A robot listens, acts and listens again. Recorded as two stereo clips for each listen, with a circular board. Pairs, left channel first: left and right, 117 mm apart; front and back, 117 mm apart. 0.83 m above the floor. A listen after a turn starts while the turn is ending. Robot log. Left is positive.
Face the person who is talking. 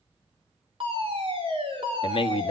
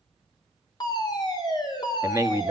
note: The man speaking: 120° left.
cmd yaw +120
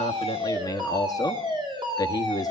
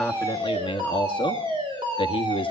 note: The man speaking is now 35° left.
cmd yaw +35
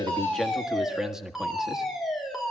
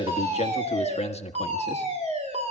end: Found it: a man speaking, straight ahead, 1 to 2 m away.